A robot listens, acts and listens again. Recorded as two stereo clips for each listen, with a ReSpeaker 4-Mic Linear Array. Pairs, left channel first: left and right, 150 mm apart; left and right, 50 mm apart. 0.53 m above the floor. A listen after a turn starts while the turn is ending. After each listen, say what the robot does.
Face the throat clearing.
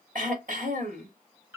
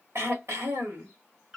Turn 60° right.
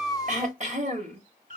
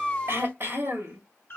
Turn 55° right.
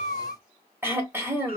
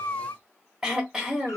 Turn 15° right.
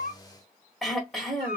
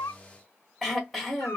Found it: throat clearing, straight ahead, 1 to 2 m away.